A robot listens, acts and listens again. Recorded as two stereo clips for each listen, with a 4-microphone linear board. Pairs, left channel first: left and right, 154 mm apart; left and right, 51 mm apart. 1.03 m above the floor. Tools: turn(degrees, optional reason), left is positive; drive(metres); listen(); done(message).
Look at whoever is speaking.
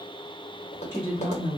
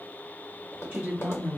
turn(degrees=-20, reason="The woman speaking: about 20° right or 160° right.")
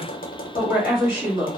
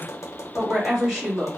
done("Found it: a woman speaking, straight ahead.")